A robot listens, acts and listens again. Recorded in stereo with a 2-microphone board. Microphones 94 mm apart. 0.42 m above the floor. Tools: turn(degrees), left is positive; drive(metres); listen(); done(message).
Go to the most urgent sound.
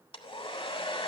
listen()
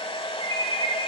turn(degrees=-60)
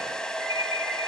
turn(degrees=-40)
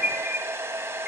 drive(metres=1.0)
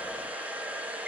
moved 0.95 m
listen()
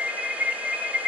turn(degrees=-10)
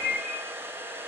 drive(metres=1.0)
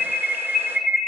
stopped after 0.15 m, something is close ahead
done("I am next to the alarm.")